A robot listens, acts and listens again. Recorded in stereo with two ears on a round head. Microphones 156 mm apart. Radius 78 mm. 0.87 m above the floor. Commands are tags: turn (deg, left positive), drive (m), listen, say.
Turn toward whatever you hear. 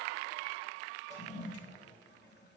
<turn deg="70"/>
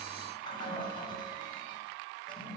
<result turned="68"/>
<turn deg="30"/>
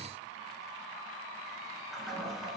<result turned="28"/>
<say>Facing the toilet flushing.</say>